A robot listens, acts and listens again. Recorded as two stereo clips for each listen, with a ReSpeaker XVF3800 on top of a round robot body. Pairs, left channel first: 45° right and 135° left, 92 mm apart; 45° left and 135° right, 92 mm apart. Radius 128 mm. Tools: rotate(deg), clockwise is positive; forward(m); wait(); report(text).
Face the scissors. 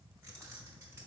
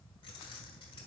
wait()
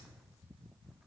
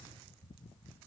wait()
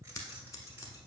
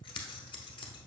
rotate(-10)
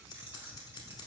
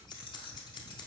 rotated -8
report("Facing the scissors, under 1 m away.")